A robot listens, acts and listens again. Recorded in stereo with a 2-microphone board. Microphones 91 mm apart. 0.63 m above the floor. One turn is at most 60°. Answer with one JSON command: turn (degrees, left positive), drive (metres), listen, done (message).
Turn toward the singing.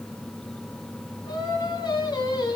{"turn": 50}
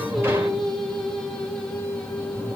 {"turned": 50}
{"turn": 15}
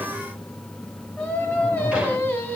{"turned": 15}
{"turn": 20}
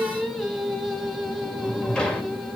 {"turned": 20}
{"done": "Facing the singing, 2 to 4 m away."}